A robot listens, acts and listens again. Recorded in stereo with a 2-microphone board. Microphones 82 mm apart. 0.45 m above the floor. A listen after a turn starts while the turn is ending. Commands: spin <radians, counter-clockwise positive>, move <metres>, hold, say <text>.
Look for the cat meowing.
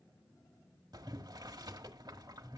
hold
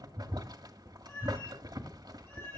spin 0.52
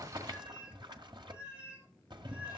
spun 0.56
spin -0.35
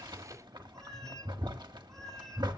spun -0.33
say Facing the cat meowing.